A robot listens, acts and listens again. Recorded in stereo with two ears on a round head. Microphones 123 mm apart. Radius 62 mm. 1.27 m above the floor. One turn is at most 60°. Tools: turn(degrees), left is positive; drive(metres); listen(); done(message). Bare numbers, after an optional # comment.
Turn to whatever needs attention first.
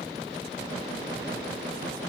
listen()
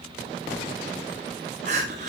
# The crying: about 55° right or 125° right.
turn(-55)
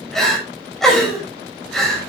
done("Found it: crying, straight ahead, over 4 m away.")